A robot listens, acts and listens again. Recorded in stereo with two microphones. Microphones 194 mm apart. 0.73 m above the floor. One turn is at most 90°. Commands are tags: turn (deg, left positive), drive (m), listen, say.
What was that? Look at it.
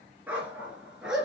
<turn deg="-30"/>
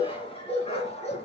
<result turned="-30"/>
<turn deg="35"/>
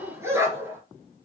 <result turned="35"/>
<turn deg="-10"/>
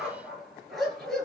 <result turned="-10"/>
<say>Found it: a dog barking, straight ahead, 2 to 4 m away.</say>